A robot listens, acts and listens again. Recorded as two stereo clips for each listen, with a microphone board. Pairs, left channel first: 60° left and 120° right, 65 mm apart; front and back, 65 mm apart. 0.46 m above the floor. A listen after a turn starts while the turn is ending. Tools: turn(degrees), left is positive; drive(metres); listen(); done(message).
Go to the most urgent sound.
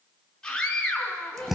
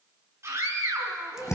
turn(degrees=140)
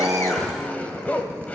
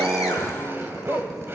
listen()
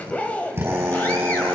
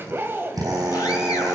listen()
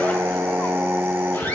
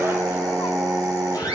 done("I heard a scream from this way, but can't make it out now. I did not reach it.")